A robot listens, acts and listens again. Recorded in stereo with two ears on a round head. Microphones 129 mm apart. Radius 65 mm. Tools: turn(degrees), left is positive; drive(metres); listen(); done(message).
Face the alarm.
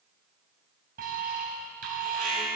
turn(degrees=-65)
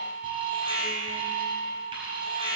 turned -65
turn(degrees=-40)
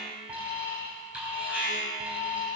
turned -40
turn(degrees=-10)
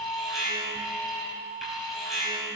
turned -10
done("Facing the alarm.")